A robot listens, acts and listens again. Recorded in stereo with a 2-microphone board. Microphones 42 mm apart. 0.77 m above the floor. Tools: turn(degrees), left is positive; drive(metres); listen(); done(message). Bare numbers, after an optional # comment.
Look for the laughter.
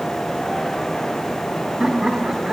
# The laughter: about 20° right or 160° right.
turn(-20)
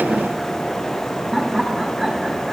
turn(-30)
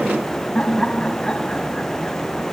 # So it is at 20° left.
turn(20)
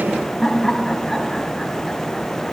done("Facing the laughter, over 4 m away.")